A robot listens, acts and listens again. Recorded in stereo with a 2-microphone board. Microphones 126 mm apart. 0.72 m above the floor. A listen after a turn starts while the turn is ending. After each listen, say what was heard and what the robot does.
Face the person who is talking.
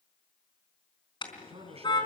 The man speaking: about 50° right or 130° right. Turn 50° right.
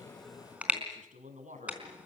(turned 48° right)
So it is at 85° right. Turn 85° right.
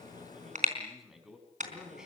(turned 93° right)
Found it: a man speaking, straight ahead.